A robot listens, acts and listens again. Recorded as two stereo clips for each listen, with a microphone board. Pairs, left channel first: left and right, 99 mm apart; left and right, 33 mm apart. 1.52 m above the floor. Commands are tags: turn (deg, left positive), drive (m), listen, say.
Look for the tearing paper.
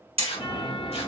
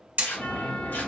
<turn deg="90"/>
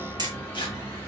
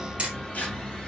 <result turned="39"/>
<turn deg="55"/>
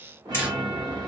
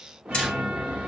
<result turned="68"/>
<turn deg="-15"/>
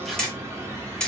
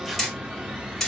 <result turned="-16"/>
<listen/>
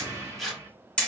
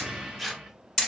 <say>Facing the tearing paper, under 1 m away.</say>